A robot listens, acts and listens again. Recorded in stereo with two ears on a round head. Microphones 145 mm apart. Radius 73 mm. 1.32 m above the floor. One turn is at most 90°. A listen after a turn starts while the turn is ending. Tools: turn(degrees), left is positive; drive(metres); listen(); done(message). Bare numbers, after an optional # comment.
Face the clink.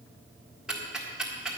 listen()
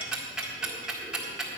listen()
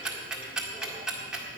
done("I can't make out a clink to turn to.")